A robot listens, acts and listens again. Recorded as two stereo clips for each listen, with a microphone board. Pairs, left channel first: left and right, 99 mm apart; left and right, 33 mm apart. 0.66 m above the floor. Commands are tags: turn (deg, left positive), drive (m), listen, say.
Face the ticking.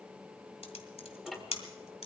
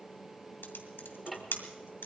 <turn deg="30"/>
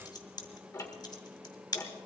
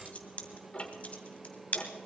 <turn deg="145"/>
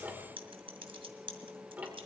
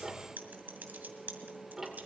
<turn deg="-15"/>
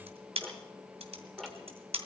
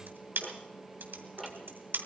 <say>Found it: ticking, straight ahead.</say>